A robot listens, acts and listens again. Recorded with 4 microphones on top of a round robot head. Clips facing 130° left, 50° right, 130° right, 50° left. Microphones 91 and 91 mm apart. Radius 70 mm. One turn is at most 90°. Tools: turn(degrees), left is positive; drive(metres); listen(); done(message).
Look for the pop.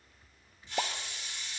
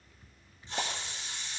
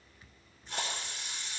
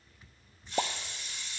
turn(degrees=65)
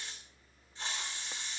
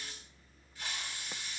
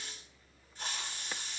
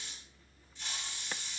done("I heard a pop from this way, but can't make it out now.")